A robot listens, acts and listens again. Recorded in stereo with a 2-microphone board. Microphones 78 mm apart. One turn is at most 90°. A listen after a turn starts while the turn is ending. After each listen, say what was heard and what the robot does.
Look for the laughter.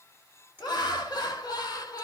The laughter: about 55° left or 125° left. Turn 55° left.
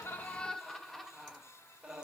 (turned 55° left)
So it is at 15° right. Turn 15° right.
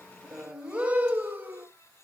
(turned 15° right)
The laughter is now 25° right. Turn 25° right.
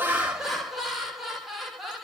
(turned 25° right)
Found it: laughter, straight ahead, 1 to 2 m away.